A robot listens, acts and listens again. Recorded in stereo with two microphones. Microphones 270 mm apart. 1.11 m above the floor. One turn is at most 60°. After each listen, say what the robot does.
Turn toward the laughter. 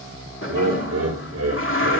Turn 60° right.
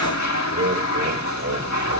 Turn 60° right.
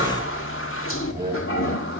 Turn 30° right.
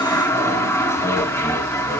Keep listening.
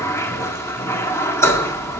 Keep listening.
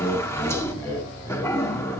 Found it: laughter, straight ahead.